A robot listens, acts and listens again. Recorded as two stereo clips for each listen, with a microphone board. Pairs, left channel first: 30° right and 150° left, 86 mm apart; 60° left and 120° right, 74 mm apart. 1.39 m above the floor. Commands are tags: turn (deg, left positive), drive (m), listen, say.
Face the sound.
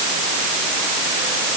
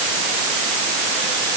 <listen/>
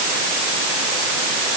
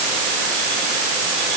<listen/>
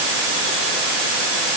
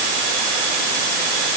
<say>I can't make out anything.</say>